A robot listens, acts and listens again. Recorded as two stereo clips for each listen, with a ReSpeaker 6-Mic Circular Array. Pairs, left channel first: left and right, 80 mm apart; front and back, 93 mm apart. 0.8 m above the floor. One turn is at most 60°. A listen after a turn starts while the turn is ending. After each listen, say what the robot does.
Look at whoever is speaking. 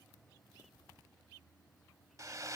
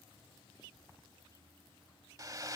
Keep listening.
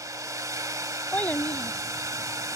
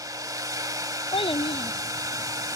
Turn 20° left.
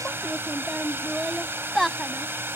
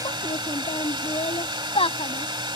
Found it: a child speaking, straight ahead.